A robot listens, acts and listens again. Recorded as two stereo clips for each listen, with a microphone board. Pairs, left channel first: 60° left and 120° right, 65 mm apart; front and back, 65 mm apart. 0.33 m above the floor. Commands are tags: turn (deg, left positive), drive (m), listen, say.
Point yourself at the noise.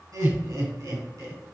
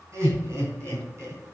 <turn deg="-135"/>
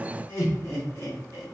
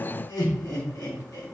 <turn deg="20"/>
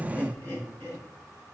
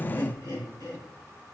<say>Facing the laughter.</say>